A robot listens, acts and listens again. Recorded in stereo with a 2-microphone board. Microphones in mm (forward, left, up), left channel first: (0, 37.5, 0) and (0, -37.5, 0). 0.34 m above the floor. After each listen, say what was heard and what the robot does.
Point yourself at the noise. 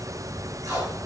The tape being pulled: about 50° right or 130° right. Turn 50° right.
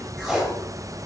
Found it: tape being pulled, straight ahead.